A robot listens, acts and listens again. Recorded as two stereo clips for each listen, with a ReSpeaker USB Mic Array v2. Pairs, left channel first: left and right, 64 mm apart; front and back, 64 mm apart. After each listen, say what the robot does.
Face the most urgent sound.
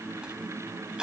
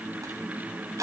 Keep listening.
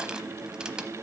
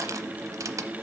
Keep listening.
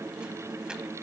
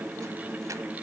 I can't make out anything urgent, only crushing.